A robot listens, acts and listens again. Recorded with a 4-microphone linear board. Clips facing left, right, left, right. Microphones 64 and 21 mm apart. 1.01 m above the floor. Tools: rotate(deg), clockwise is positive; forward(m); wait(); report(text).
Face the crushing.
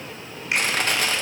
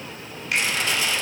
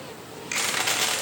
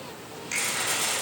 rotate(-50)
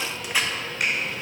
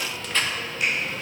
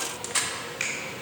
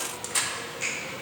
rotate(-10)
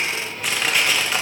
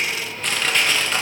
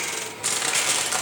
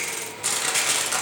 report("Facing the crushing, under 1 m away.")